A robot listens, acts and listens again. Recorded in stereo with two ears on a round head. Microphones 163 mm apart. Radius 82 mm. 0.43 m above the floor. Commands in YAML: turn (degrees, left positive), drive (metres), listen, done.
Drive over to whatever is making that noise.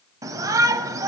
turn: -20
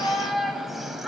drive: 1.0
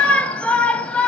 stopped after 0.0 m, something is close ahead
turn: 10
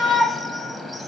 done: "Blocked. The shout is further on, straight ahead."